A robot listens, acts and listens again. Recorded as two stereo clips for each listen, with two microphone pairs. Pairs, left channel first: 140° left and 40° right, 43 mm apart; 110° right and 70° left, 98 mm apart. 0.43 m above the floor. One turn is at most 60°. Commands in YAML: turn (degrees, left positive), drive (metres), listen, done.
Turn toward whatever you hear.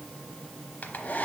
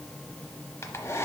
turn: -60
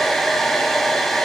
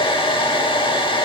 turn: -60
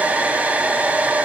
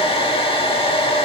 turn: -60
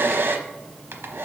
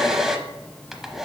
turn: -15
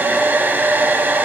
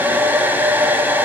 done: "Facing the hair dryer, under 1 m away."